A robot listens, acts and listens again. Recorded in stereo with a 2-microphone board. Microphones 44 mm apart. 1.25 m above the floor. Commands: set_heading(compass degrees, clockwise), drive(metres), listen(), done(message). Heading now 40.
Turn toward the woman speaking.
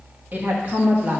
set_heading(75)
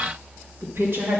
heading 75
set_heading(200)
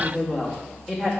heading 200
set_heading(190)
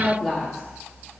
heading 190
done("Found it: a woman speaking, straight ahead, 2 to 4 m away.")